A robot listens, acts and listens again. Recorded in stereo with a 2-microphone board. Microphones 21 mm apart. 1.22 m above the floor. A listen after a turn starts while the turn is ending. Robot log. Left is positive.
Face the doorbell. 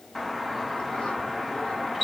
cmd yaw +30
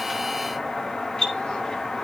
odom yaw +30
note: So it is at 145° left.
cmd yaw +145
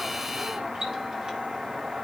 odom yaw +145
note: The doorbell is now 45° right.
cmd yaw -45
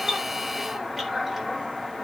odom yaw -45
note: The doorbell is now 15° right.
cmd yaw -15
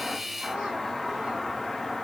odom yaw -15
end: Facing the doorbell, 2 to 4 m away.